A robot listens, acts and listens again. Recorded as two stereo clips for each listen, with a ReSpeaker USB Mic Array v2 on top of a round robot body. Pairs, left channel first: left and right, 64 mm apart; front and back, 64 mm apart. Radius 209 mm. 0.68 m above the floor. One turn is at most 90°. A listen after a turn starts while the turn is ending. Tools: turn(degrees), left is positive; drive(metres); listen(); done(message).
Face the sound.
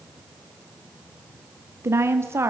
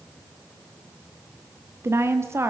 turn(degrees=-90)
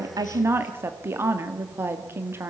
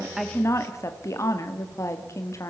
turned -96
turn(degrees=-40)
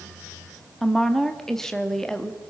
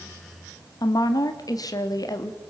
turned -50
turn(degrees=10)
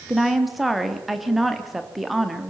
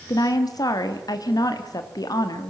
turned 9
done("Facing the woman speaking, 1 to 2 m away.")